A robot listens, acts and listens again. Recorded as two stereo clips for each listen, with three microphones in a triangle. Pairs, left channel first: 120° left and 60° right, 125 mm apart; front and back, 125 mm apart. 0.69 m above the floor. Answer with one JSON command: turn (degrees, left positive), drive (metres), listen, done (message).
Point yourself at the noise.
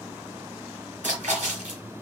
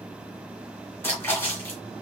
{"turn": -70}
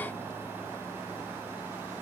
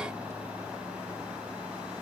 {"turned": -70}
{"done": "Facing where the splash came from. I can't hear it now."}